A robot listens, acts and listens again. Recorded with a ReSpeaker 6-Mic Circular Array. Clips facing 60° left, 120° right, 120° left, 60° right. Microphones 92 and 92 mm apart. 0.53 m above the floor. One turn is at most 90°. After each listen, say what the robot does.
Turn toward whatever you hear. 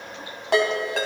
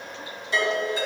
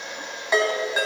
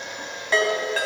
Turn 45° left.
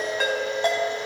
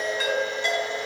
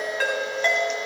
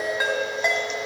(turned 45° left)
Turn 15° left.
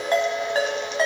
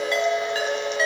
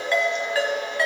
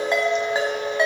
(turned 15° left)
Turn 10° left.
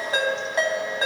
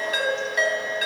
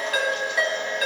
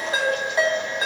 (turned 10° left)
Found it: a ringtone, straight ahead.